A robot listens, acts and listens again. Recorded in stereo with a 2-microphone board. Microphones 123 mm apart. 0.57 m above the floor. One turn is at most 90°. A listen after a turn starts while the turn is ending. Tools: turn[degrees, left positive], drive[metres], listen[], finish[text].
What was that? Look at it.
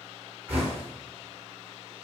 Thought: The knocking: about 20° right or 160° right.
Action: turn[-20]
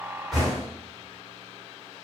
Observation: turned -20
Action: finish[Found it: knocking, straight ahead, 1 to 2 m away.]